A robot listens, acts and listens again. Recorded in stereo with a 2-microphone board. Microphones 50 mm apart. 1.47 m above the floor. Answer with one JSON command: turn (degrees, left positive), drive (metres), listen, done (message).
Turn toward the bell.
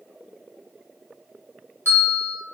{"turn": -60}
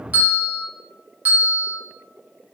{"turn": -40}
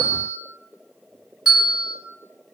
{"done": "Found it: a bell, straight ahead, 1 to 2 m away."}